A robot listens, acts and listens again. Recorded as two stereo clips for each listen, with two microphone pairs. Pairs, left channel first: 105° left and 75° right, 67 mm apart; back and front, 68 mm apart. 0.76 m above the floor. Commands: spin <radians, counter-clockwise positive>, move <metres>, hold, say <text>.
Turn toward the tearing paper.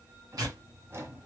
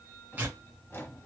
spin -1.05
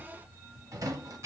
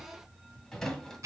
spin -0.61
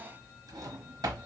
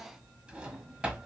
hold
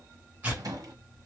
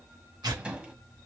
spin -0.17
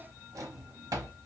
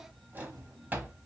hold
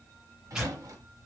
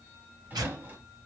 say Found it: tearing paper, straight ahead, 1 to 2 m away.